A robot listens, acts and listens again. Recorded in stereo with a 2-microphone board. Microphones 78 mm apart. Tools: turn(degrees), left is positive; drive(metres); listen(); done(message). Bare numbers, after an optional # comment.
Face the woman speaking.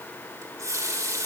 listen()
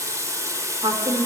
# The woman speaking: about 75° right or 105° right.
turn(-75)
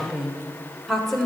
done("Found it: a woman speaking, straight ahead, 2 to 4 m away.")